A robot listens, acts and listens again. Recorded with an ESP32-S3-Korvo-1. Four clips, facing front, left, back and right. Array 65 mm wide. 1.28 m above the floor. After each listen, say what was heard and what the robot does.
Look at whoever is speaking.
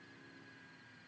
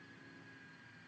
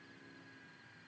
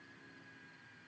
Keep listening.
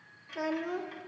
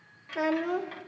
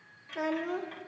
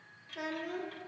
The child speaking: 95° left. Turn 95° left.
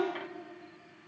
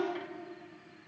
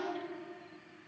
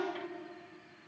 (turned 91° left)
Found it: a child speaking, straight ahead.